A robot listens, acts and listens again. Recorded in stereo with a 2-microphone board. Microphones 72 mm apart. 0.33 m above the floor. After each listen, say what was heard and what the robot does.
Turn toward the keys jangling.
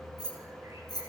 The keys jangling: about 65° left or 115° left. Turn 65° left.
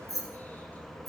So it is at 55° left. Turn 55° left.
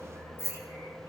The keys jangling is now 35° left. Turn 35° left.
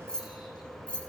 The keys jangling is now 15° left. Turn 15° left.
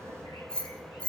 The keys jangling is now 15° left. Turn 15° left.
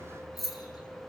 Found it: keys jangling, straight ahead.